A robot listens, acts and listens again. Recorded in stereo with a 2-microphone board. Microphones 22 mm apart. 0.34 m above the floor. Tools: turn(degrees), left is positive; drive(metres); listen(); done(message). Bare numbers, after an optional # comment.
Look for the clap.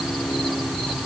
listen()
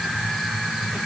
listen()
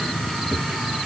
done("I can't make out a clap.")